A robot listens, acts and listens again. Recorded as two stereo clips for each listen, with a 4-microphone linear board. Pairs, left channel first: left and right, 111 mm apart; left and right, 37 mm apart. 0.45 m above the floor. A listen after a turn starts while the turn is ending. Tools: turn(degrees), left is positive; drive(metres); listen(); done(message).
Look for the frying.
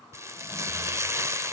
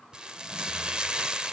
turn(degrees=-25)
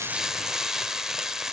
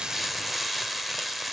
done("Facing the frying, 1 to 2 m away.")